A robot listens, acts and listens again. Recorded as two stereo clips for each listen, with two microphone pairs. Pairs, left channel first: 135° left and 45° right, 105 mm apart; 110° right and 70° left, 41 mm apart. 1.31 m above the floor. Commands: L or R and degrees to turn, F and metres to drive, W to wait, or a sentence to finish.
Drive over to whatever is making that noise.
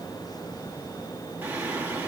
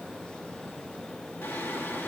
R115
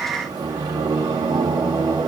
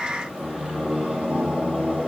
L10
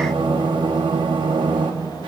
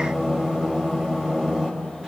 F1.0
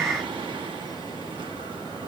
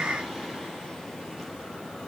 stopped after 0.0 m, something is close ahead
Blocked. The singing is further on, straight ahead.